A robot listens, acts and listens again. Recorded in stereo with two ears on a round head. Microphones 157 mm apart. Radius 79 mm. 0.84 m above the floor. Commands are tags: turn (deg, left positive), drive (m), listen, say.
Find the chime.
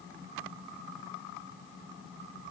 <listen/>
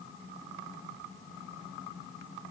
<listen/>
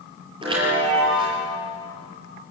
<turn deg="-25"/>
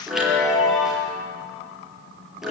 <say>Found it: a chime, straight ahead, over 4 m away.</say>